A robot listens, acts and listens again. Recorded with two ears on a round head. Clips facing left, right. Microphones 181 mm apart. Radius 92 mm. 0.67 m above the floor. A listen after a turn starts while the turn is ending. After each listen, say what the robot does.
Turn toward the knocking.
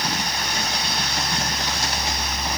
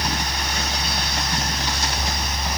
Keep listening.
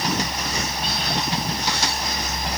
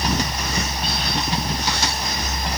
Keep listening.
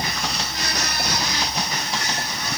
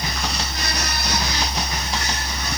I can't make out knocking to turn to.